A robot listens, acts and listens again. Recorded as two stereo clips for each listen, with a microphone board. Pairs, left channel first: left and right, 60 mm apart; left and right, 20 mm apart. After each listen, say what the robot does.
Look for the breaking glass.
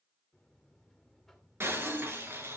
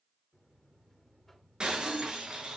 Turn 45° right.
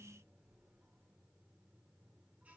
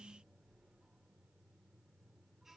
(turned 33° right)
Keep listening.
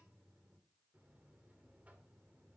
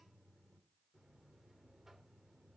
I heard breaking glass, but can't make it out now. It was about 10° right or 105° right.